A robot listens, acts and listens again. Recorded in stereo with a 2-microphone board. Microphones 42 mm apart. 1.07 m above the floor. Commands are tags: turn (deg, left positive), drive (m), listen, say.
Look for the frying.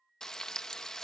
<turn deg="30"/>
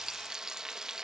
<turn deg="-15"/>
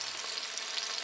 <say>Facing the frying.</say>